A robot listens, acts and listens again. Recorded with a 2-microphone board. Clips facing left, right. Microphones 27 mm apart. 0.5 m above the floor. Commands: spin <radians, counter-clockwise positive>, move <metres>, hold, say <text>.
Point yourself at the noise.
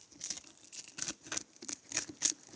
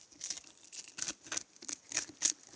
hold
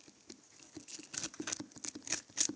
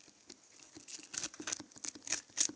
hold
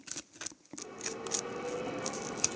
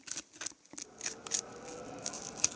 spin 1.31
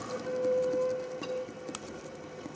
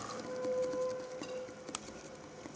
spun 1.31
spin 0.35
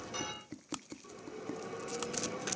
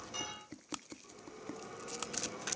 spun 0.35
spin 0.17
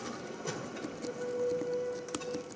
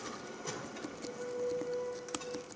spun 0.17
say Found it: a bell, straight ahead.